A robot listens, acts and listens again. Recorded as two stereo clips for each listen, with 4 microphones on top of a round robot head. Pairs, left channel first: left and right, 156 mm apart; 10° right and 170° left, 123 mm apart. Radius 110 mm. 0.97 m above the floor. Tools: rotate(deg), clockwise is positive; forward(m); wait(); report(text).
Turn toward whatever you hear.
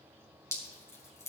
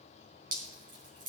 rotate(-165)
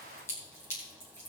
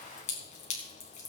rotate(-15)
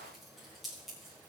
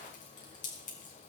report("Found it: dripping, straight ahead, 2 to 4 m away.")